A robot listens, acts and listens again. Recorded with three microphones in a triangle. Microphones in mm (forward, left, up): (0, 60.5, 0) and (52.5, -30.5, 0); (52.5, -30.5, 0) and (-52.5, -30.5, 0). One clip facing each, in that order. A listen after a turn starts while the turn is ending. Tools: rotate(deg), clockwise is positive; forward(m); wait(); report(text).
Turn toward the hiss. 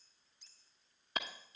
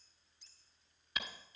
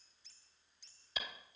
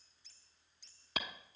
rotate(-170)
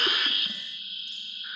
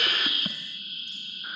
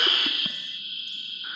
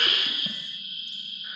rotate(20)
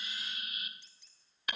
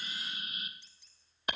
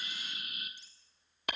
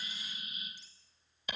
report("Facing the hiss.")